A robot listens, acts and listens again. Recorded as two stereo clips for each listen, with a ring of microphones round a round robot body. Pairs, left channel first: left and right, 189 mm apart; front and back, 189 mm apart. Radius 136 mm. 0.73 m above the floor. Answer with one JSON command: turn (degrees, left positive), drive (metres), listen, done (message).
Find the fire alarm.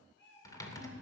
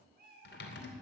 {"listen": true}
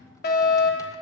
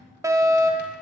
{"turn": 110}
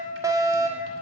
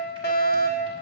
{"turn": -20}
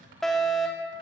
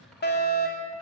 {"done": "Facing the fire alarm, 2 to 4 m away."}